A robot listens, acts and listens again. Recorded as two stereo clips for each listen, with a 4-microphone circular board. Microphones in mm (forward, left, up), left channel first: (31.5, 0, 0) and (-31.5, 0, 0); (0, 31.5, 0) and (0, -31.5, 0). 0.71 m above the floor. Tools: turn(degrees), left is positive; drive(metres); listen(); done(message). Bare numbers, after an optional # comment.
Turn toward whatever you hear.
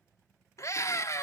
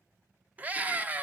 # The scream: 30° right.
turn(-30)
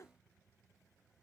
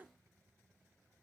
listen()
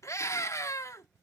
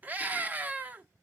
# The scream is now 30° right.
turn(-30)
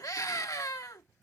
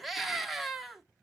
done("Facing the scream, 1 to 2 m away.")